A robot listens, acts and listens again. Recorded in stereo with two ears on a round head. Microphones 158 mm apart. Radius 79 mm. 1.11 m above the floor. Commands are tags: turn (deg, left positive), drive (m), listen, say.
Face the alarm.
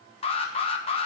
<turn deg="30"/>
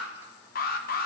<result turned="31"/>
<turn deg="110"/>
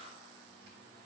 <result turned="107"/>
<listen/>
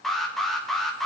<say>Facing the alarm.</say>